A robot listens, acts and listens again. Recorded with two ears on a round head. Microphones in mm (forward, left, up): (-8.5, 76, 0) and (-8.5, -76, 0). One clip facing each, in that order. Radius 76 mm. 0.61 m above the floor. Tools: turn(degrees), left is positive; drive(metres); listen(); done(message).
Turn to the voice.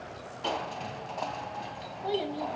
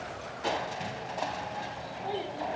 turn(degrees=55)
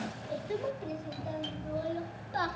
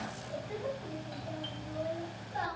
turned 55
turn(degrees=80)
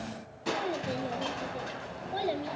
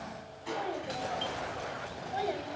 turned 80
turn(degrees=45)
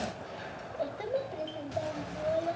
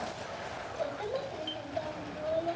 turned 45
turn(degrees=20)
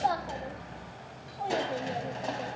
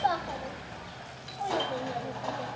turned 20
done("Facing the child speaking, 2 to 4 m away.")